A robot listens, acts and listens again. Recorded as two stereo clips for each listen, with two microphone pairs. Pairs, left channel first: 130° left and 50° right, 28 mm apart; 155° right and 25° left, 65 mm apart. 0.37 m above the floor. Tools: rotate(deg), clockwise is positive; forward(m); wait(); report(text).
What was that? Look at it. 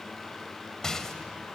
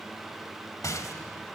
rotate(165)
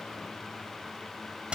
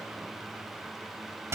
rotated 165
report("Facing the rattle, 1 to 2 m away.")